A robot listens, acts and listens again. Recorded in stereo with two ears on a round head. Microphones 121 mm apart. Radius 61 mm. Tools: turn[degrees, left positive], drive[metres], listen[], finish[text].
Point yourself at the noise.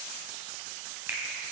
Thought: The finger snap: about 15° right or 165° right.
Action: turn[-15]
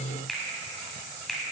Action: finish[Found it: a finger snap, straight ahead.]